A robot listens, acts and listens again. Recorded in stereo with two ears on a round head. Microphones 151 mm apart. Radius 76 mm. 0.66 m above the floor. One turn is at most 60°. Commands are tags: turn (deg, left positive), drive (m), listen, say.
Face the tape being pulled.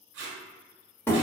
<turn deg="-60"/>
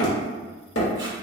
<listen/>
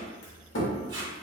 <turn deg="-25"/>
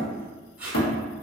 <turn deg="-10"/>
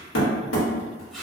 <say>Facing the tape being pulled.</say>